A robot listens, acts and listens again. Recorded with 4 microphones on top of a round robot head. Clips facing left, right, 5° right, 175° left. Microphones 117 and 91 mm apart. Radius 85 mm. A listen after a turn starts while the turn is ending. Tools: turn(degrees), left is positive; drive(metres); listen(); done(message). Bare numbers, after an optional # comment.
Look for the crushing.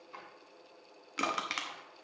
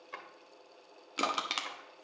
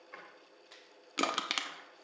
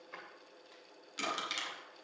# The crushing: 20° right.
turn(-20)
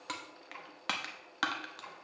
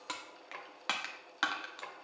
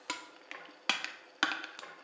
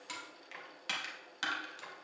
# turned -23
done("Found it: crushing, straight ahead, under 1 m away.")